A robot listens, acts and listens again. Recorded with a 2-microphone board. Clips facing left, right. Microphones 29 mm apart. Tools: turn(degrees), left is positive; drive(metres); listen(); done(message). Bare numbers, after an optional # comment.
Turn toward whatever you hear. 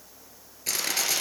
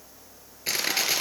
# The crushing: about 20° right or 160° right.
turn(-20)
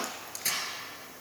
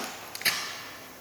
# So it is at 135° right.
turn(-135)
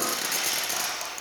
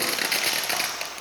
# The crushing is now 50° right.
turn(-50)
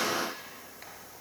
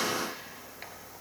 listen()
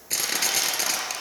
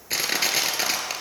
# The crushing is now 20° right.
turn(-20)
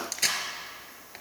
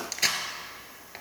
# The crushing is now 10° right.
turn(-10)
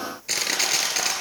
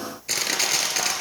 done("Facing the crushing, 2 to 4 m away.")